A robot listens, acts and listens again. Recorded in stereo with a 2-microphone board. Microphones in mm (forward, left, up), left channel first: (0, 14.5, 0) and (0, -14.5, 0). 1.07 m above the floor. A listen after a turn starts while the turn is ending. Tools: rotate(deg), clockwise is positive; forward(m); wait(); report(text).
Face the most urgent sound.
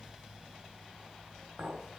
wait()
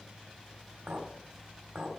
wait()
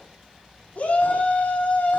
rotate(-50)
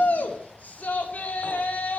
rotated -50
rotate(-75)
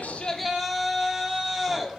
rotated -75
report("Facing the shout, 2 to 4 m away.")